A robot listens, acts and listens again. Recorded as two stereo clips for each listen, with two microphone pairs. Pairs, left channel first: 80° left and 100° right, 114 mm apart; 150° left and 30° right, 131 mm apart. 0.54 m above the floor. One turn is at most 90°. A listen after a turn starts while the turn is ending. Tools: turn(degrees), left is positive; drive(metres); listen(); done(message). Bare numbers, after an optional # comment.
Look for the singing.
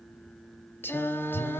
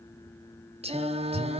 # The singing: 10° left.
turn(10)
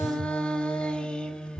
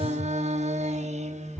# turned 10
done("Facing the singing, under 1 m away.")